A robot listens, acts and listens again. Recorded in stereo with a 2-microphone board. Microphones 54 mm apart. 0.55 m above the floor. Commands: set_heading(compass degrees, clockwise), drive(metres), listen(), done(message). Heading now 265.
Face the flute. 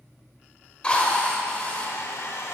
listen()
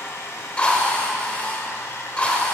listen()
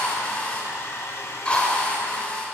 done("I can't make out a flute, only a hair dryer and a drill.")